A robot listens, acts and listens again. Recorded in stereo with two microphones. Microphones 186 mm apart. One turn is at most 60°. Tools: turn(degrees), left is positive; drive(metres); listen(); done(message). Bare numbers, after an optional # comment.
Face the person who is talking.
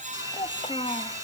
# The child speaking: about 35° left or 145° left.
turn(35)
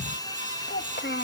# So it is at 110° left.
turn(60)
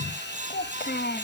# The child speaking is now 60° left.
turn(60)
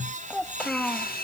done("Facing the child speaking.")